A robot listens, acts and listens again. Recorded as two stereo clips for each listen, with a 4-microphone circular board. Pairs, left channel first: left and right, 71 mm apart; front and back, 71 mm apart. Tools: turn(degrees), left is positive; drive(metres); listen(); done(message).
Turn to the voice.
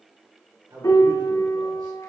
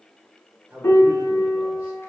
turn(degrees=-110)
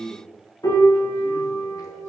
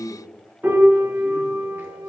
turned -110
turn(degrees=-45)
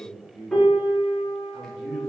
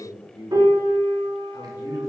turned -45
turn(degrees=10)
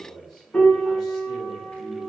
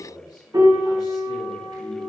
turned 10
done("Facing the man speaking.")